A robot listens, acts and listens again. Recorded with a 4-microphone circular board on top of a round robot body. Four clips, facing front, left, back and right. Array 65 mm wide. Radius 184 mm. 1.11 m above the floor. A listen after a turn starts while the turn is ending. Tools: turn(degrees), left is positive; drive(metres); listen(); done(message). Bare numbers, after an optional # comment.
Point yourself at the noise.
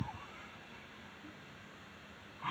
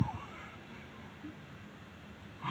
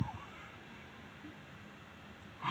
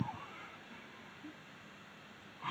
listen()
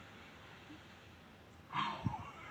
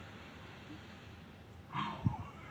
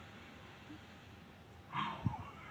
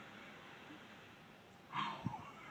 listen()
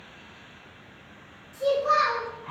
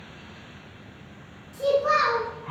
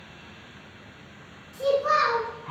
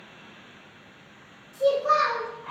# The child speaking: 125° left.
turn(125)
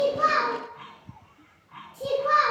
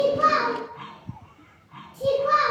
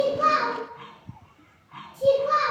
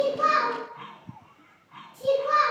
# The child speaking is now 20° left.
turn(20)
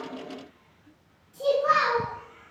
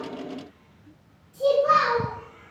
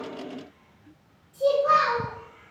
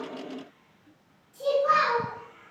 done("Found it: a child speaking, straight ahead, 1 to 2 m away.")